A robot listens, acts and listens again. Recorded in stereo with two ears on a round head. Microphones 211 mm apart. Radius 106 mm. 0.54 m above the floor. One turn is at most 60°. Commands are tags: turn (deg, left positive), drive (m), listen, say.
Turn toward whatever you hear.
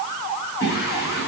<turn deg="45"/>
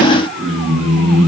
<say>Facing the singing, over 4 m away.</say>